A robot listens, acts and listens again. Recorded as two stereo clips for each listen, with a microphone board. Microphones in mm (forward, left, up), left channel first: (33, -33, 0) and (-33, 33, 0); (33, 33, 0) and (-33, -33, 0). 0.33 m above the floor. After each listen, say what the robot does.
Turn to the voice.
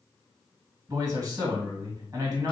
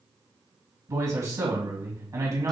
Turn 175° right.
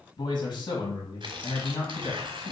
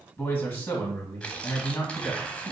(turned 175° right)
Turn 15° right.
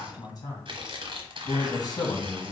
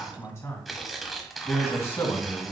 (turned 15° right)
Found it: a man speaking, straight ahead, 1 to 2 m away.